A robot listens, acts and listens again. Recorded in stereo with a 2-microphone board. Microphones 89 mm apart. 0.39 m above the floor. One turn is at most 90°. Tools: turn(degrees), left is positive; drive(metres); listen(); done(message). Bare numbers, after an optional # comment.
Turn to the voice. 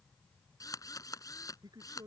# The man speaking: about 50° right or 130° right.
turn(-50)
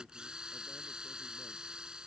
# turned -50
listen()
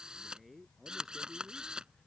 done("Facing the man speaking.")